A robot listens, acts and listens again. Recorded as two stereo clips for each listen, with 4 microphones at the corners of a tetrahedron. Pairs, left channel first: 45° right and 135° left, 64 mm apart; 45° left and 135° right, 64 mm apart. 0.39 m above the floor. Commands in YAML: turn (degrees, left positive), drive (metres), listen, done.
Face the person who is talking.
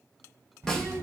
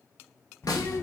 turn: 90
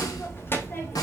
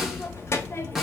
done: "Found it: a child speaking, straight ahead, under 1 m away."